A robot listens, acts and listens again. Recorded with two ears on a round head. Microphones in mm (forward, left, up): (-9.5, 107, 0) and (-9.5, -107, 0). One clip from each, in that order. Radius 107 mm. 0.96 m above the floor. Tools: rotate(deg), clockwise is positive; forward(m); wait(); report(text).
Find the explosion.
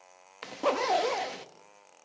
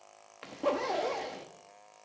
wait()
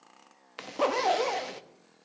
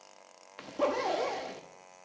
wait()
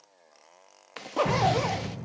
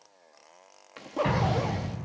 rotate(50)
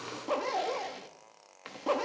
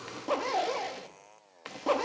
wait()
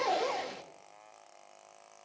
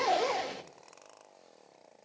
report("I heard an explosion, but can't make it out now. It was about straight ahead or 80° right.")